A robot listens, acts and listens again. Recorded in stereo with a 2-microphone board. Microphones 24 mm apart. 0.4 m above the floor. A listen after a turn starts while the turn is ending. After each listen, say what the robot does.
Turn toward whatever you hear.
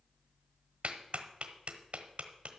Turn 60° right.
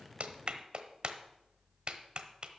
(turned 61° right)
Turn 40° right.
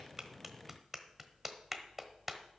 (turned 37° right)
Facing the clap.